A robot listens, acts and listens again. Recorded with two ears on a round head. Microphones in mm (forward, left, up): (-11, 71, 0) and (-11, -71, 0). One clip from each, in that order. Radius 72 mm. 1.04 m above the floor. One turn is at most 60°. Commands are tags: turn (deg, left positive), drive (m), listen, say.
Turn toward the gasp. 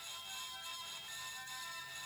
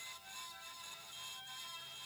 <listen/>
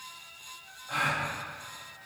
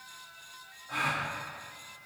<turn deg="50"/>
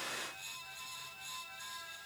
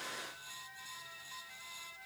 <listen/>
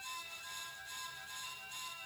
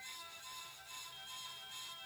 <say>I heard a gasp, but can't make it out now. It was about straight ahead or 80° left.</say>